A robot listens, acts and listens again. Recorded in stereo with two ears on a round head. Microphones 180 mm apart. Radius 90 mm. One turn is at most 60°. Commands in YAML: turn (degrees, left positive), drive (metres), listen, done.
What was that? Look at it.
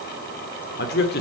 turn: 55
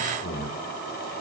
turn: 50
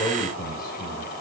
turn: 15
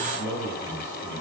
turn: 15
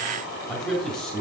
done: "Found it: a man speaking, straight ahead."